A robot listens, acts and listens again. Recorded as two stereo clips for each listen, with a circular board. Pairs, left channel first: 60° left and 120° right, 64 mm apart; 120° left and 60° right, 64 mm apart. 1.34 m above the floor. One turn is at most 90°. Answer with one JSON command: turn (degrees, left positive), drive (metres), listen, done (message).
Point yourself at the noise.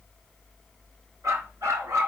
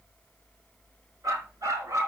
{"turn": -85}
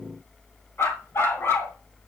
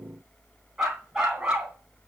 {"turn": 15}
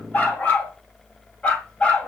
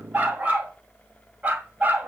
{"done": "Found it: a dog barking, straight ahead."}